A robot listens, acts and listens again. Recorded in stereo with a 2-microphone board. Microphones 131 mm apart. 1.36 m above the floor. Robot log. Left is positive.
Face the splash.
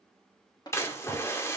note: The splash: about 20° left or 160° left.
cmd yaw +20
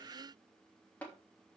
cmd idle
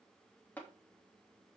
end: I heard a splash, but can't make it out now. It was about straight ahead or 140° left.